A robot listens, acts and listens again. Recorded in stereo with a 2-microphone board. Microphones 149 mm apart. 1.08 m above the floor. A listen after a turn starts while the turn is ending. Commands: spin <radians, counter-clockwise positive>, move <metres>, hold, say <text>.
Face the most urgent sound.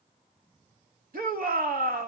spin -1.31
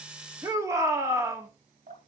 spin -0.35
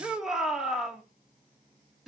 say Found it: a shout, straight ahead.